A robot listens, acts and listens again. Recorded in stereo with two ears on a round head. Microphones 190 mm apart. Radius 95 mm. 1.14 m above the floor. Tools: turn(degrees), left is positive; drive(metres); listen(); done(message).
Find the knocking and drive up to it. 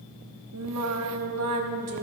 listen()
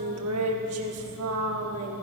listen()
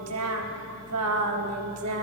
done("I can't make out knocking to turn to.")